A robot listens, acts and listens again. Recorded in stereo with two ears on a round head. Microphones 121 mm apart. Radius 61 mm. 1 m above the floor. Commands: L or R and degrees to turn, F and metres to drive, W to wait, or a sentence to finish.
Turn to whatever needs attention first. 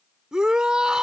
R30
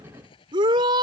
R145
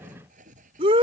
R40
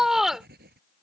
Facing the shout.